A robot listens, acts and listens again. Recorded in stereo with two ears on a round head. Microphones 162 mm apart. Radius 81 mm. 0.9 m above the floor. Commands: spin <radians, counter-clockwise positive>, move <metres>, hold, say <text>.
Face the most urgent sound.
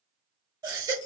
spin -0.35
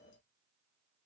hold
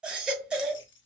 say Facing the baby crying, 1 to 2 m away.